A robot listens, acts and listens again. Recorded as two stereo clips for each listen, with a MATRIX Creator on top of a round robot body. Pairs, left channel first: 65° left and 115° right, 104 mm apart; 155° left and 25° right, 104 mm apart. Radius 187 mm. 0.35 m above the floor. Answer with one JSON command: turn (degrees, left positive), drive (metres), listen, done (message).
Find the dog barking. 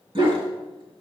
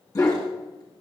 {"turn": -150}
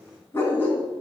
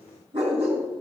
{"done": "Found it: a dog barking, straight ahead."}